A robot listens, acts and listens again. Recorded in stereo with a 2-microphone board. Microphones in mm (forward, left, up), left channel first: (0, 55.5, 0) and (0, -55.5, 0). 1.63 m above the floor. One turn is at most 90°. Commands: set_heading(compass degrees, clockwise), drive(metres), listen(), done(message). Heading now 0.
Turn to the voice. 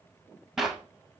listen()
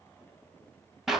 listen()
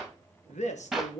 set_heading(270)
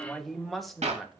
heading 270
done("Facing the woman speaking.")